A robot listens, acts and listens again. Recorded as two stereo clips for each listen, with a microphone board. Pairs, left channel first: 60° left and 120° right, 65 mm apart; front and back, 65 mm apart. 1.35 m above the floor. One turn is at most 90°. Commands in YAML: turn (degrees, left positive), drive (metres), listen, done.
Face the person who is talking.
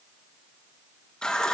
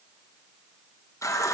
listen: true
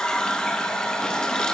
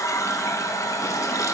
listen: true
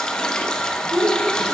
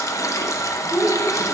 turn: -90
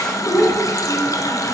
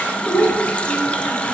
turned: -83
turn: -30
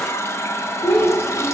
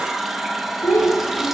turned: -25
done: "Found it: a child speaking, straight ahead."